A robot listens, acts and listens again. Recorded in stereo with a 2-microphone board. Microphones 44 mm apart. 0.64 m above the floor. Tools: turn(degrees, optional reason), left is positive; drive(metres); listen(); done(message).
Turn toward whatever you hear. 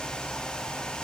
listen()
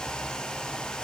listen()
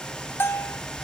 turn(degrees=60, reason="The bell: about 60° left or 120° left.")
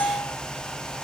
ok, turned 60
turn(degrees=55, reason="So it is at 55° left.")
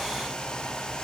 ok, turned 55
listen()
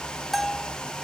done("Found it: a bell, straight ahead, under 1 m away.")